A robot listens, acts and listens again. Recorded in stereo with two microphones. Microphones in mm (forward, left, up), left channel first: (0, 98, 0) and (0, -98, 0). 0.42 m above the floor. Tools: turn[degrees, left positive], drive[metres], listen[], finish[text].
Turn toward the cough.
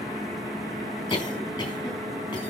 Thought: The cough: about 25° left or 155° left.
Action: turn[25]
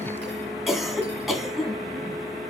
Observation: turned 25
Action: finish[Facing the cough, 2 to 4 m away.]